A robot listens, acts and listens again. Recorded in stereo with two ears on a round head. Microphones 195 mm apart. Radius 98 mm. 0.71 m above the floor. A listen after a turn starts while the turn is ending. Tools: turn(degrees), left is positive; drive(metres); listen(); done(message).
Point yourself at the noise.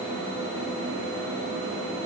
listen()
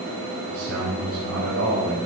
turn(degrees=-90)
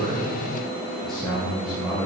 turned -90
done("Found it: a man speaking, straight ahead, 2 to 4 m away.")